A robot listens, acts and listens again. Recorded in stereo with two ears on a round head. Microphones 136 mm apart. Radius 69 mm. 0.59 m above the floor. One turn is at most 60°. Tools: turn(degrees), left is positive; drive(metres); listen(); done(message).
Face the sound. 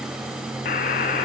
turn(degrees=60)
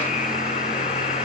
turn(degrees=50)
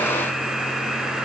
done("Found it: a buzzer, straight ahead, 1 to 2 m away.")